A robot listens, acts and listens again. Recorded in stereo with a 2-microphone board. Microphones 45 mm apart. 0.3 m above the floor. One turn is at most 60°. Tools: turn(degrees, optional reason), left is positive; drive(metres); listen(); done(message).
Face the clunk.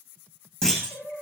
turn(degrees=15, reason="The clunk: about 15° left or 165° left.")
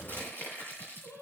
listen()
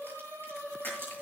done("I heard a clunk, but can't make it out now. It was about straight ahead or 150° left.")